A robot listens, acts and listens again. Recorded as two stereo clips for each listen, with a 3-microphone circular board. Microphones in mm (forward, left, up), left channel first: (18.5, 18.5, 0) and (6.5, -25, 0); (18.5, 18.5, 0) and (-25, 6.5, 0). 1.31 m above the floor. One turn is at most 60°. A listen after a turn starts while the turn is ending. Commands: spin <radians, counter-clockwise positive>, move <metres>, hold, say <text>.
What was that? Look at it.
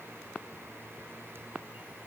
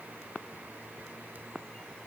hold
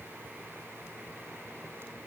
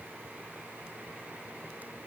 hold
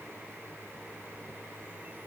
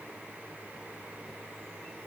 say I can't make out anything to turn to.